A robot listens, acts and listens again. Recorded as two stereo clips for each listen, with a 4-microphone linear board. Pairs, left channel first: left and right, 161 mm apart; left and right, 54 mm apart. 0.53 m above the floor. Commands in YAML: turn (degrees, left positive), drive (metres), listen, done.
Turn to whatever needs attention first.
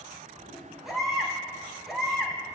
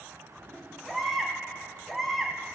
turn: 30
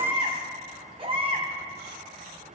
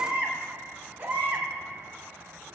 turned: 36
turn: -35
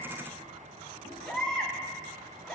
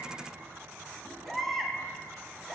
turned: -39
done: "Found it: a baby crying, straight ahead."